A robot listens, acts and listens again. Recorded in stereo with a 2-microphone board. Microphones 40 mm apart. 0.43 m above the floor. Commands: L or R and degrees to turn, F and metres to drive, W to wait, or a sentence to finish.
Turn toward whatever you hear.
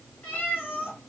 L70
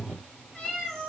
L10
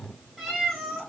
Found it: a cat meowing, straight ahead.